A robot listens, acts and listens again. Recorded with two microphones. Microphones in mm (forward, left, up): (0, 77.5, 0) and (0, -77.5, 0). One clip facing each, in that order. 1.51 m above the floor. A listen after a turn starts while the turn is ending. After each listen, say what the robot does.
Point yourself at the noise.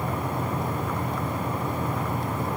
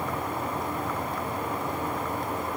Keep listening.
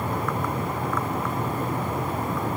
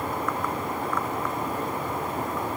Keep listening.
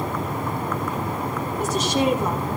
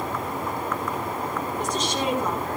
Turn 30° left.
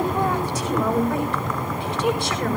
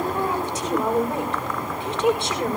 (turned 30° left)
Turn 25° right.
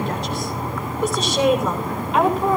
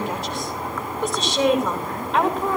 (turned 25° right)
Found it: a woman speaking, straight ahead, over 4 m away.